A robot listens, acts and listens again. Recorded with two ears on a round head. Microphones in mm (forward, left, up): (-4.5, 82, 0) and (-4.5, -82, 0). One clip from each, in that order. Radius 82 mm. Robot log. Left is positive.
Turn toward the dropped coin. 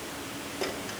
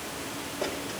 note: The dropped coin: about 55° left or 125° left.
cmd yaw +55
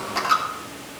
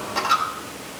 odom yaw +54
note: So it is at 20° left.
cmd yaw +20
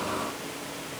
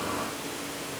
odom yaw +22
end: I heard a dropped coin from this way, but can't make it out now.